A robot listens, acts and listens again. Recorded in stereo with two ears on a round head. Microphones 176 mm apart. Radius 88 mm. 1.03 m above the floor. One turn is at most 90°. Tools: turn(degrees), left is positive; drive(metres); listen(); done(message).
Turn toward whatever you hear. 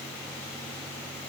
listen()
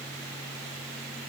listen()
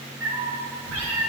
turn(degrees=-90)
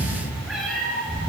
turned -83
done("Found it: a cat meowing, straight ahead, over 4 m away.")